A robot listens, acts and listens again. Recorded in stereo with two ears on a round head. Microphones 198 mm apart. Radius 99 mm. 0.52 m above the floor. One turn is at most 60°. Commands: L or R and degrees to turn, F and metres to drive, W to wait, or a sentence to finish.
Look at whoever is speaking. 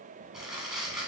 W
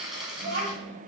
R35
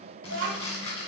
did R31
R60
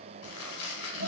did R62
R50
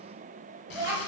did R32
R15
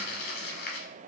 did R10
W
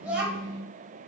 Found it: a child speaking, straight ahead.